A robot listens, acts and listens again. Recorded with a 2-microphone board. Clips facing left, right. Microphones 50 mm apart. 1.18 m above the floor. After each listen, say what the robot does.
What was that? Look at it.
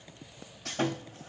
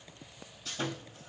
Turn 65° left.
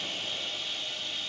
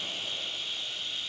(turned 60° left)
Turn 50° left.
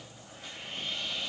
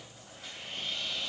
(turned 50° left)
Facing the sawing, 2 to 4 m away.